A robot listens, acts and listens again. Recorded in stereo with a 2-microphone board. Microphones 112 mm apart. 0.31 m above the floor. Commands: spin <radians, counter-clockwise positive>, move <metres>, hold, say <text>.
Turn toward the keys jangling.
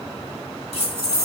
spin -1.22
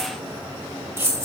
spin -0.44
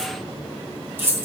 spin -0.44
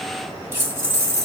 spin -0.52
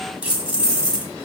spin -0.17
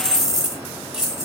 say Facing the keys jangling.